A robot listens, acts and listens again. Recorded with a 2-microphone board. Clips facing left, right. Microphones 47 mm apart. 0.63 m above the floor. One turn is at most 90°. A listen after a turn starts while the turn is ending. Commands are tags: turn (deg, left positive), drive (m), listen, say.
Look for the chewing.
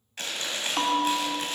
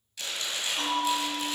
<turn deg="50"/>
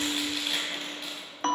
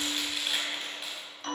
<say>Found it: chewing, straight ahead.</say>